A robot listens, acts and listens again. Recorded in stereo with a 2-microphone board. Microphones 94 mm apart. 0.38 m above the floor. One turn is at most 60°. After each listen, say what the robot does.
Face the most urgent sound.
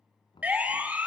Turn 15° right.
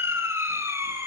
Turn 60° right.
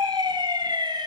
Turn 60° right.
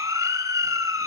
Turn 50° right.
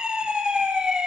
Turn 10° right.
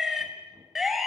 Found it: a siren, straight ahead.